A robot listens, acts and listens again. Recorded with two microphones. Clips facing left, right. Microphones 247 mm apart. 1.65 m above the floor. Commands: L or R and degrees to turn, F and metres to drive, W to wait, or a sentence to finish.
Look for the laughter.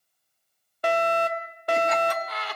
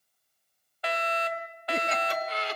R25
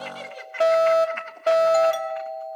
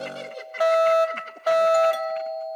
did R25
R35
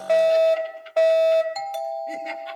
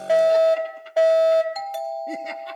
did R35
R135
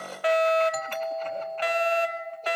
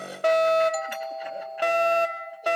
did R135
W
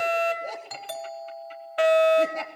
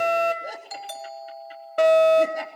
R10
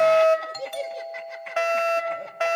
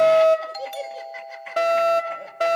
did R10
Facing the laughter, 2 to 4 m away.